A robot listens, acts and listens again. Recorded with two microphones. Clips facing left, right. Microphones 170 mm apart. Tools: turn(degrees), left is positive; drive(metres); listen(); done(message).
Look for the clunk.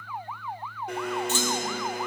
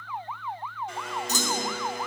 turn(degrees=-40)
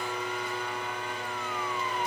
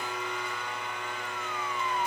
listen()
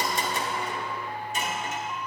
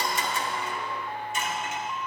done("I heard a clunk, but can't make it out now. It was about straight ahead or 100° right.")